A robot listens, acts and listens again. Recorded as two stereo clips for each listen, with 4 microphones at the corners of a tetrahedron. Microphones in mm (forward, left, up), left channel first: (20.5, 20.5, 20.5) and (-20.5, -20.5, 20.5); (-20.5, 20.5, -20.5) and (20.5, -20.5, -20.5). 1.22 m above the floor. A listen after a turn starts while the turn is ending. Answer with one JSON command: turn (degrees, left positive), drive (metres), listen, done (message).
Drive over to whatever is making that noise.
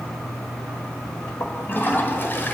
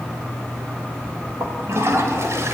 {"turn": -10}
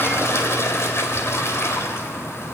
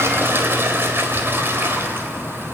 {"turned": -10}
{"drive": 1.0}
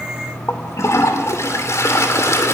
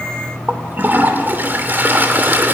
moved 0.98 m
{"turn": 10}
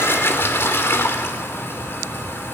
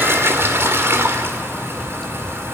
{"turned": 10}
{"drive": 1.0}
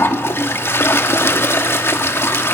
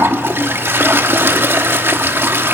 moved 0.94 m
{"drive": 1.0}
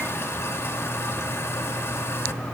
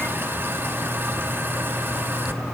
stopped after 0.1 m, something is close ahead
{"listen": true}
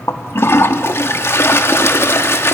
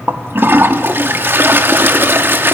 {"done": "Arrived at the toilet flushing, straight ahead."}